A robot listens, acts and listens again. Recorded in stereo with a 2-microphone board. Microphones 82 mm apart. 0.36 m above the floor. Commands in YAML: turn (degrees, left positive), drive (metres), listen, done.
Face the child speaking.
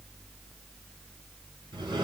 listen: true
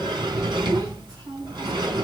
turn: -50
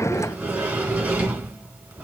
listen: true
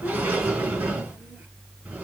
listen: true
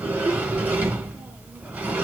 done: "I heard a child speaking, but can't make it out now. It was about straight ahead or 80° right."